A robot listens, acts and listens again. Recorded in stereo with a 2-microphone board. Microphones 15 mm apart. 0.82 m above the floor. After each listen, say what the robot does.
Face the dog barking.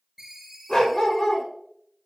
Turn 75° left.
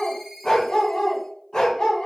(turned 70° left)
Turn 60° left.
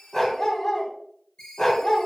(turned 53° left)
Turn 35° left.
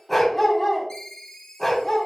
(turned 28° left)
Turn 10° left.
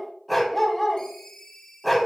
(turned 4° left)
Found it: a dog barking, straight ahead.